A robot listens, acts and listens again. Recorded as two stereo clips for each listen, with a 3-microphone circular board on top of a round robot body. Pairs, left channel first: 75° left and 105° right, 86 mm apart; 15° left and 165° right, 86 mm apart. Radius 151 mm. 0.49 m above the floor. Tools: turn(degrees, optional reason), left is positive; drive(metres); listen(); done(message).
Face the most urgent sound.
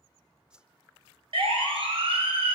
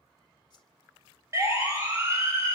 turn(degrees=-105, reason="The siren: 105° right.")
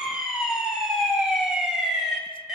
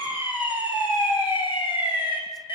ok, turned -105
turn(degrees=-20, reason="The siren is now 20° right.")
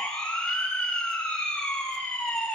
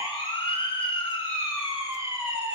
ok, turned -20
done("Facing the siren, over 4 m away.")